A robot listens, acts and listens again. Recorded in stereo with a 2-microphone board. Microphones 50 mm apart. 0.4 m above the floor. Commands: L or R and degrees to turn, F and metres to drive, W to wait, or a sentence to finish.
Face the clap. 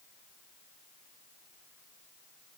W
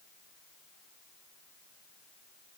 W
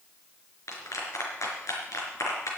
L90
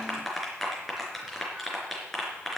Found it: a clap, straight ahead, 2 to 4 m away.